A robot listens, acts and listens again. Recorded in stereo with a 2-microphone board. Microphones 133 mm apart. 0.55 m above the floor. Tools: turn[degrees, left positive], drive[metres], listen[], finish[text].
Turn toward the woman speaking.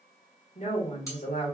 Thought: The woman speaking: about 55° left or 125° left.
Action: turn[55]
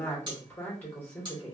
Thought: So it is at 15° left.
Action: turn[15]
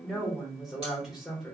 Action: finish[Found it: a woman speaking, straight ahead, 1 to 2 m away.]